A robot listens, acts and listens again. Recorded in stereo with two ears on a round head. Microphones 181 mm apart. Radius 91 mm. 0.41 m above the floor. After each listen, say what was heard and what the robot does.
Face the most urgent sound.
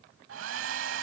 Keep listening.
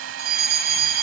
The fire alarm: about 50° right or 130° right. Turn 50° right.
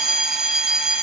Found it: a fire alarm, straight ahead, over 4 m away.